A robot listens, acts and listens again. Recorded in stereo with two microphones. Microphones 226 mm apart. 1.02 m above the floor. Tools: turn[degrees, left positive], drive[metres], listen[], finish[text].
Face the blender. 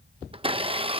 Thought: The blender: about 25° right or 155° right.
Action: turn[-25]
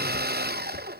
Thought: So it is at 125° right.
Action: turn[-125]
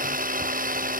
Thought: The blender is now 45° right.
Action: turn[-45]
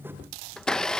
Action: finish[Facing the blender.]